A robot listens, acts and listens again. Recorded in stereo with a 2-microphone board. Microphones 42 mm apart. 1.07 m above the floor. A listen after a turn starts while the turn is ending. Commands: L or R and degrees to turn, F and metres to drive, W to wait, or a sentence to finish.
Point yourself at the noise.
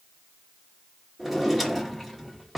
L30
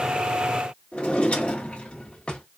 L150
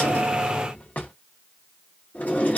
L40
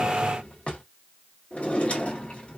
L30
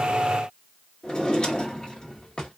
L20
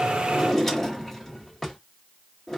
Facing the drawer.